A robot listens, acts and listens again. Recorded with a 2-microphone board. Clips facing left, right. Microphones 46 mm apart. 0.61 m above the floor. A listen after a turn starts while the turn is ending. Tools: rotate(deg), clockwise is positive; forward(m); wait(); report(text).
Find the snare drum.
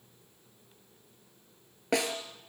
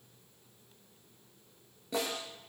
rotate(-90)
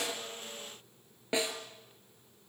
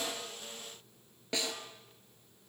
rotate(-15)
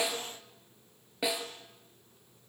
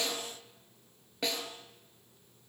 report("Facing the snare drum.")